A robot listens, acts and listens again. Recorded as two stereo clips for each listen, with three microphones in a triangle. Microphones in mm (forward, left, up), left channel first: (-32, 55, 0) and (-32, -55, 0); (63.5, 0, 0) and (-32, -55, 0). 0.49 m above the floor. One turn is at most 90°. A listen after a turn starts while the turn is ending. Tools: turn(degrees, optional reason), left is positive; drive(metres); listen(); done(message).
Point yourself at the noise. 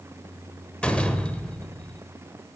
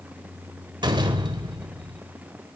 turn(degrees=90, reason="The door slam: 170° left.")
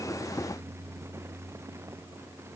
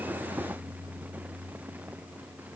turn(degrees=80, reason="Nothing new. It was at 80° left.")
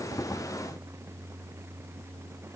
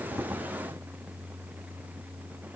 done("Facing where the door slam came from. I can't hear it now.")